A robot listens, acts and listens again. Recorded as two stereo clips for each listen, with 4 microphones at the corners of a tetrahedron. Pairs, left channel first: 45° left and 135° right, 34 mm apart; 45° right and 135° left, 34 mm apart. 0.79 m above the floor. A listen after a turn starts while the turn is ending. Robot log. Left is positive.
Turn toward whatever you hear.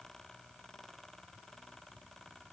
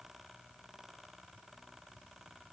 cmd idle
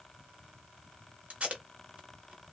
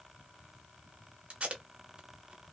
note: The tape being pulled: 175° right.
cmd yaw -175
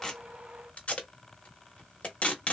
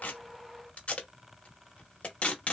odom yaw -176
end: Found it: tape being pulled, straight ahead.